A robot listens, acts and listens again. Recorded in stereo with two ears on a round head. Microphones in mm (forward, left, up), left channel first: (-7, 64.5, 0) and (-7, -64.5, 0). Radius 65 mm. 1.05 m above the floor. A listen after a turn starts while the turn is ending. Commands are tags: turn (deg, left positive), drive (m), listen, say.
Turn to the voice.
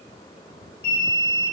<listen/>
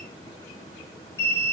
<listen/>
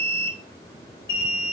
<say>I can't make out anyone speaking, only an alarm.</say>